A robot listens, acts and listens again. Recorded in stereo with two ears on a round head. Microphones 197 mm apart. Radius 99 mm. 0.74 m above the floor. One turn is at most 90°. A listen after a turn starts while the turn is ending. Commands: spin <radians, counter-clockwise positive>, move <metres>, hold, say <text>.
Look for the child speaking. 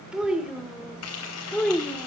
spin 0.52
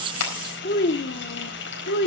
spin 1.57
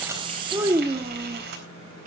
spin -0.61
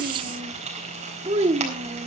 spin -0.44
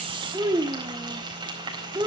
spin -0.26
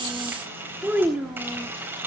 say Facing the child speaking.